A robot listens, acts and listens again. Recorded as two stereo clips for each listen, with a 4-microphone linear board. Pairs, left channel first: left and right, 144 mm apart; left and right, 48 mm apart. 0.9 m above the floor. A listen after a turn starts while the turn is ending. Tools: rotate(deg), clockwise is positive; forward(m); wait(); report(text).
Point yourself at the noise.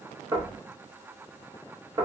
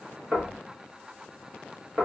rotate(30)
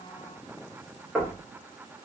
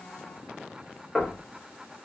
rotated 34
report("Found it: knocking, straight ahead, 1 to 2 m away.")